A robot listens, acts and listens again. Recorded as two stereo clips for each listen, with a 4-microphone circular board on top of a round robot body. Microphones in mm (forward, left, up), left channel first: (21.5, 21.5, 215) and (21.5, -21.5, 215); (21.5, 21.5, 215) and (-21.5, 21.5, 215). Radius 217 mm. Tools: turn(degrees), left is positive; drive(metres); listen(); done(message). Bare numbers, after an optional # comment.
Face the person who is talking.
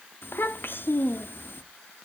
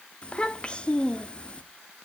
# The child speaking: 65° left.
turn(65)
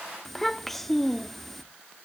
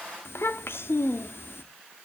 done("Facing the child speaking, 1 to 2 m away.")